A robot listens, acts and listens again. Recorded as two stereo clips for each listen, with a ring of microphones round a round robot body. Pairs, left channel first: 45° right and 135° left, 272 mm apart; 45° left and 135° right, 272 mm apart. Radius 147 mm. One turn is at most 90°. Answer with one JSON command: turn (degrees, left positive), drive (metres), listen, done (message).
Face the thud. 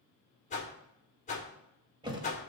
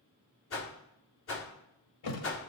{"turn": 60}
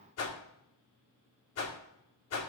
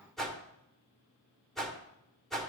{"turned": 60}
{"done": "Facing where the thud came from. I can't hear it now."}